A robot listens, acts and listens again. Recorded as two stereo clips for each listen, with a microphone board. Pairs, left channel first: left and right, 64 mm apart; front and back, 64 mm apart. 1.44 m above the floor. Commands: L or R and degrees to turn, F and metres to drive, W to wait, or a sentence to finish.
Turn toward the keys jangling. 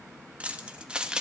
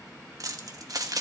R165
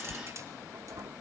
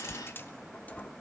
R65
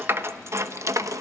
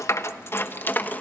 R65
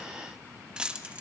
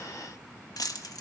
R20
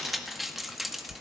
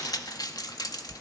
Found it: keys jangling, straight ahead, 1 to 2 m away.